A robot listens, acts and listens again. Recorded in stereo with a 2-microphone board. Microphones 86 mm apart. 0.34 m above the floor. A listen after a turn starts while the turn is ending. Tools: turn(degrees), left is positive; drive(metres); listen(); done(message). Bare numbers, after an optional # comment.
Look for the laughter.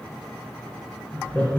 # The laughter: about 20° left or 160° left.
turn(20)
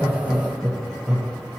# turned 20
done("Facing the laughter, 1 to 2 m away.")